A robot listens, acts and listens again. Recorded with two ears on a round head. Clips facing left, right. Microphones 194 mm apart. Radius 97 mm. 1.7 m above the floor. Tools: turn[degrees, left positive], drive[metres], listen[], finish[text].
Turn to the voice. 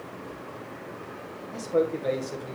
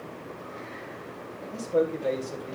Action: turn[30]
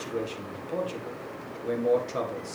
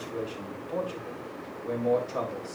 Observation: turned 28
Thought: So it is at 150° left.
Action: turn[150]
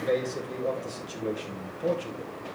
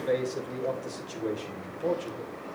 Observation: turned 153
Action: finish[Facing the man speaking, 1 to 2 m away.]